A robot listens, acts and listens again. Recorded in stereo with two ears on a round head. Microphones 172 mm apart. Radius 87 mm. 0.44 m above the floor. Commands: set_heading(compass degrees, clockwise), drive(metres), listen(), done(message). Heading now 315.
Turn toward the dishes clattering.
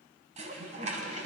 set_heading(350)
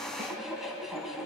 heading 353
done("Found it: dishes clattering, straight ahead, 2 to 4 m away.")